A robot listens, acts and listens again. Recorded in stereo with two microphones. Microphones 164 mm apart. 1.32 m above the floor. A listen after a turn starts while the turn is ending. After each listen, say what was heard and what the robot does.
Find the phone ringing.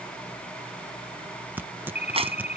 The phone ringing: about 45° left or 135° left. Turn 45° left.
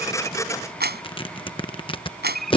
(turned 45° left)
Facing the phone ringing.